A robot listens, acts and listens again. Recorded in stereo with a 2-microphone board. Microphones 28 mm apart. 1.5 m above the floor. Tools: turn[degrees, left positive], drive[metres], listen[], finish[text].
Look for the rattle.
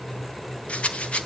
Thought: The rattle: about 55° left or 125° left.
Action: turn[55]
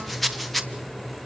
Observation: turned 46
Thought: So it is at 10° left.
Action: turn[10]
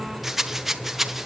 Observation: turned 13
Action: finish[Found it: a rattle, straight ahead, 1 to 2 m away.]